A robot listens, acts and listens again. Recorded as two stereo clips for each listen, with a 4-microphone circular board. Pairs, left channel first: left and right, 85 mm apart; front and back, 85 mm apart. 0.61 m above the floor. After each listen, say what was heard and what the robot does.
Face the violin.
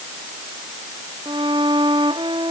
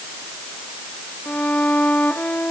The violin: 75° right. Turn 75° right.
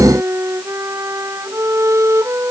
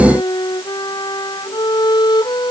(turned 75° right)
The violin is now 35° right. Turn 35° right.
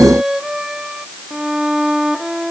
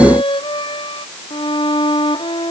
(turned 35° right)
Found it: a violin, straight ahead.